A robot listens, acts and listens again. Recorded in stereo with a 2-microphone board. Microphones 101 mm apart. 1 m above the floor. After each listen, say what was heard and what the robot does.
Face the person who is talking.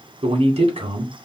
Turn 90° right.
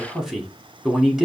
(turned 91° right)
Facing the man speaking.